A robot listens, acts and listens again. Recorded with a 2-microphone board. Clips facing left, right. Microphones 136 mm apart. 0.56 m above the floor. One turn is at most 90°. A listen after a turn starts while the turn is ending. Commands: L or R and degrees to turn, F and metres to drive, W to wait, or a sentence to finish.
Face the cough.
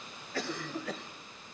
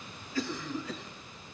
L65
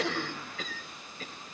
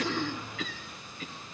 L45
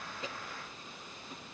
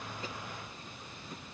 W
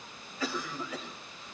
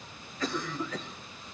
L10
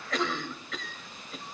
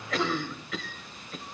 Found it: a cough, straight ahead, 2 to 4 m away.